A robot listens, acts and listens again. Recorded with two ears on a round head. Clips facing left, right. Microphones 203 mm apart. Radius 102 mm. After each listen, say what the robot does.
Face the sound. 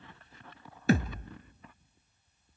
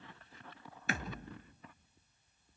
Turn 30° left.
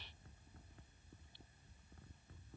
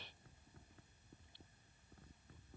Keep listening.
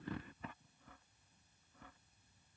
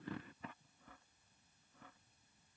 I heard a thud, but can't make it out now. It was about straight ahead or 120° left.